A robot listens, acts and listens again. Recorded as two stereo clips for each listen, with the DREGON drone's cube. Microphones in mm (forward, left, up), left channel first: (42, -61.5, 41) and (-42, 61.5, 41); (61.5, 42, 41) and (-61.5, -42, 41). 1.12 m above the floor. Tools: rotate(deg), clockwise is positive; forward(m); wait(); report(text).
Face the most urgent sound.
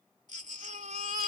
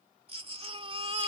rotate(-160)
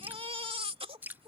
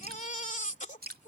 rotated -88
rotate(-70)
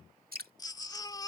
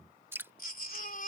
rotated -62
rotate(-10)
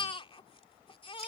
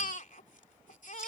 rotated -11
report("Found it: a baby crying, straight ahead.")